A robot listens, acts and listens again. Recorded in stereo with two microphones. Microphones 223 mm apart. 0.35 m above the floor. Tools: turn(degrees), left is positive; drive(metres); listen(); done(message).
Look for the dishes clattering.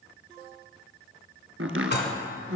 turn(degrees=50)
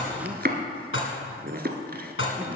turn(degrees=75)
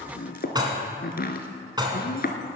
turn(degrees=-20)
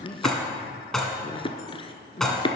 done("Found it: dishes clattering, straight ahead.")